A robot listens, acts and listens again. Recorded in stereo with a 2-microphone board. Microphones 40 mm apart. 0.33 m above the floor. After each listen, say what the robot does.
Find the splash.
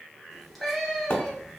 Turn 65° left.
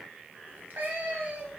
Keep listening.
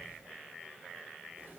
I heard a splash, but can't make it out now. It was about straight ahead or 50° left.